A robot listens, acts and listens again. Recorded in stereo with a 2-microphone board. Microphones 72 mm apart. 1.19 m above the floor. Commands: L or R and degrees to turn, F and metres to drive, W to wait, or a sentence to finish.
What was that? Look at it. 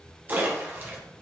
R30
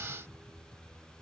W
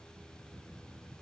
I heard a splash, but can't make it out now. It was about straight ahead or 120° right.